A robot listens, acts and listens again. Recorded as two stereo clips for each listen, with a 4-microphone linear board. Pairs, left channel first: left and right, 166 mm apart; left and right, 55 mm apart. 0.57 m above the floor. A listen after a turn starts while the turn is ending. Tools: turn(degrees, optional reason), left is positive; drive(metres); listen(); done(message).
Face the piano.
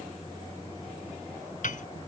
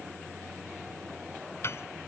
turn(degrees=50, reason="The piano: about 50° left or 130° left.")
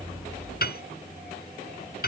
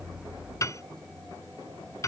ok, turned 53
turn(degrees=75, reason="So it is at 75° left.")
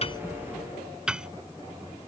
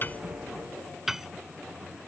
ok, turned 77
done("Facing the piano.")